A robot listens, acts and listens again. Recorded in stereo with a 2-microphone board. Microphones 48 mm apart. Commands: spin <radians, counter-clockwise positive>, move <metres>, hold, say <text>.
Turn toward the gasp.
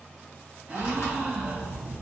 spin -0.35
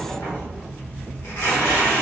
hold
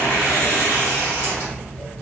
say I heard a gasp, but can't make it out now. It was about straight ahead or 140° right.